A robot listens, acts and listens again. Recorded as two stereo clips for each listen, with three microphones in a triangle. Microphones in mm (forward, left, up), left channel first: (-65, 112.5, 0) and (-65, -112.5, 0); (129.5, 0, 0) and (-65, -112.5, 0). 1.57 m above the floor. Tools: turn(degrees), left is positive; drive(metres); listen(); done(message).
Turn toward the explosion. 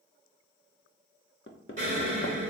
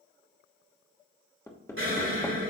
turn(degrees=-140)
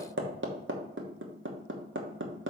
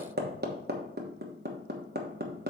done("Facing where the explosion came from. I can't hear it now.")